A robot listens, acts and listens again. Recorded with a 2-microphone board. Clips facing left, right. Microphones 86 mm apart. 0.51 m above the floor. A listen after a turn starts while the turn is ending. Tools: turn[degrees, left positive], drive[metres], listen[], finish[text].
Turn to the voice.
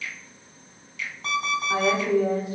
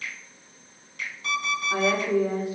Thought: The woman speaking: about 65° left or 115° left.
Action: turn[65]
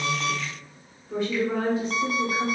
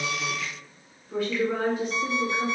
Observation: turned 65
Thought: So it is at 30° left.
Action: turn[30]
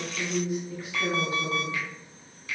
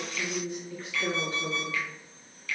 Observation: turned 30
Thought: The woman speaking is now 10° left.
Action: turn[10]
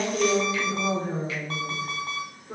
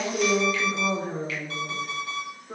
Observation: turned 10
Action: finish[Found it: a woman speaking, straight ahead.]